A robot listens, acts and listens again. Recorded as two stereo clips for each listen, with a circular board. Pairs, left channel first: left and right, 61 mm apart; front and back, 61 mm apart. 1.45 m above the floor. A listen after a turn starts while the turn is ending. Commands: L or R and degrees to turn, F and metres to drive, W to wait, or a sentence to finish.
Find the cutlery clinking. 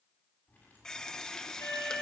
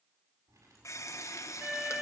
L150
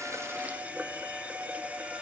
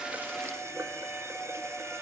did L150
W
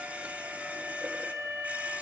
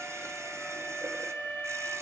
W
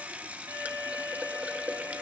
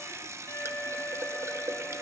Facing where the cutlery clinking came from. I can't hear it now.